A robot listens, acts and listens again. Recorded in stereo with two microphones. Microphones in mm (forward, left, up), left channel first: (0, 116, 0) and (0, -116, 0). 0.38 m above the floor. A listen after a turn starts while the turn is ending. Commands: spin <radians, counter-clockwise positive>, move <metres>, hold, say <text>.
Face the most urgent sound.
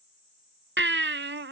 spin -0.96
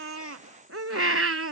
spin -1.31
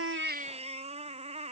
spin -0.52
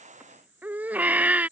say Facing the baby crying.